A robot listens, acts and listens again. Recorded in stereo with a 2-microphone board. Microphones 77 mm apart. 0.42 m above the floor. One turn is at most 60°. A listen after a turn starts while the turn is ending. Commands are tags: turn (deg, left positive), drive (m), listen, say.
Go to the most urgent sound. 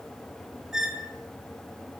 <listen/>
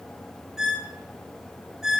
<listen/>
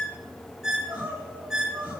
<turn deg="-15"/>
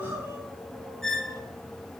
<turn deg="-60"/>
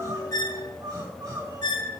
<turn deg="-60"/>
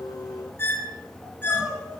<drive m="1.0"/>
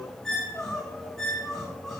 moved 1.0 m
<drive m="1.0"/>
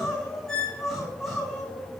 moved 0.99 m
<drive m="1.0"/>
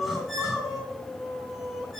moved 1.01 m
<drive m="1.0"/>
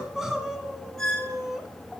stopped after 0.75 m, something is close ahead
<say>I am next to the crying.</say>